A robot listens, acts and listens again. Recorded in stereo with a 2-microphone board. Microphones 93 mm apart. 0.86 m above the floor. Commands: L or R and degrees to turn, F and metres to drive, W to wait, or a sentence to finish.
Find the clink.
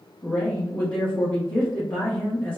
W
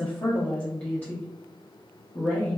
W
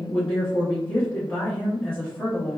I can't make out a clink to turn to.